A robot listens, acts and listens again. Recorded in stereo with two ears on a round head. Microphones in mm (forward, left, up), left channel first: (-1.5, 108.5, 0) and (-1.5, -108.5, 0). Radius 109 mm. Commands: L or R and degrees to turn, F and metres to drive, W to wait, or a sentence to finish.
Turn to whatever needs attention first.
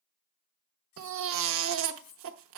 R60
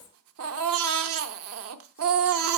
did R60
R60
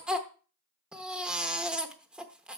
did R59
Facing the baby crying.